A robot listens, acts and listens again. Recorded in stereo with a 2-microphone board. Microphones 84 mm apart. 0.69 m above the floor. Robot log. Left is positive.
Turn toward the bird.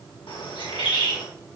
cmd yaw +90
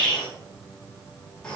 note: So it is at 10° left.
cmd yaw +10
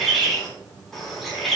end: Facing the bird, over 4 m away.